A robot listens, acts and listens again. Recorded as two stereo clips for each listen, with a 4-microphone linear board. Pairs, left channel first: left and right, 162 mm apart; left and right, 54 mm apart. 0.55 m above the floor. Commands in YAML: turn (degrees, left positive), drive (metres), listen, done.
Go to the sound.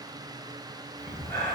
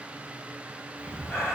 turn: 30
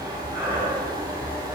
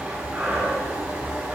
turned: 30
turn: -15
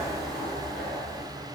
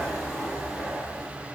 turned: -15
drive: 1.0
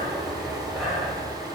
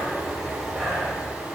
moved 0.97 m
drive: 1.0
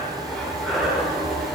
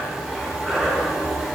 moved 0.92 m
drive: 1.0
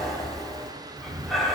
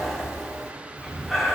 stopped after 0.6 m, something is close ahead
done: "I am next to the breathing."